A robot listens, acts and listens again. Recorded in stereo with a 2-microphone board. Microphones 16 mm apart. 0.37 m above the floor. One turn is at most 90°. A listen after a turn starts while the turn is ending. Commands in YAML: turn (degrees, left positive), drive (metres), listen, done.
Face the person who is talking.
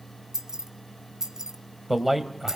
turn: -30
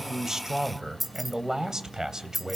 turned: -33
turn: -90
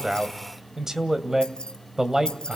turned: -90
turn: -45
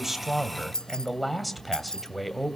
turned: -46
done: "Found it: a man speaking, straight ahead, 2 to 4 m away."